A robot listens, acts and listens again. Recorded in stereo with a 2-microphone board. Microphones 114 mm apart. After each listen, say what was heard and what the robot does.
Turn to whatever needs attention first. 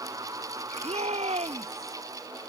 The shout: about 65° right or 115° right. Turn 65° right.
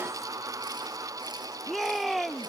Found it: a shout, straight ahead.